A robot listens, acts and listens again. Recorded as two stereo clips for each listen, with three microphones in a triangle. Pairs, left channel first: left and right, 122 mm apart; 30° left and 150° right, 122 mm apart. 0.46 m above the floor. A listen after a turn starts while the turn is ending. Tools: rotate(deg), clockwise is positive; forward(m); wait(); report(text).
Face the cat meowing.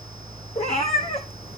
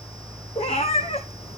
rotate(-60)
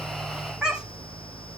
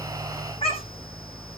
rotate(10)
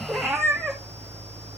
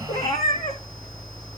report("Facing the cat meowing.")